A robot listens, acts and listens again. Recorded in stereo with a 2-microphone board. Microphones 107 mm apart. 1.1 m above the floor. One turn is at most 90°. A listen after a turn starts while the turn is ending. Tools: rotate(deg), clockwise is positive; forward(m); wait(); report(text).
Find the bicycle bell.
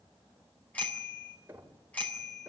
rotate(-30)
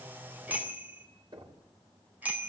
rotate(15)
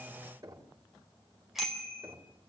report("Facing the bicycle bell.")